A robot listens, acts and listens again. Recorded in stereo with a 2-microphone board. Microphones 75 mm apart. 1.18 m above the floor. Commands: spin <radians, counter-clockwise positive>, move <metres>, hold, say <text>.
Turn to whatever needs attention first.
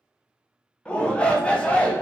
spin 0.52
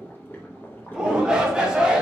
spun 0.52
spin -0.26
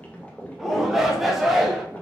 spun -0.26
say Found it: a shout, straight ahead.